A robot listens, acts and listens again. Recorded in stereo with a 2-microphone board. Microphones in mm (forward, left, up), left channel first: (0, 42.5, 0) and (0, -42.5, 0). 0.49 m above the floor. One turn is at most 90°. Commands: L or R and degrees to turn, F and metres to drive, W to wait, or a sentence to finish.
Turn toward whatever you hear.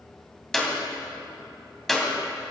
L30
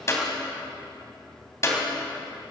L90
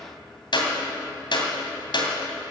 L70
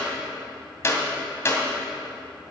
L30
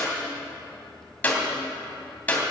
L20
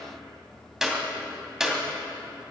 R10
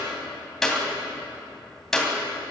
Facing the clap, 2 to 4 m away.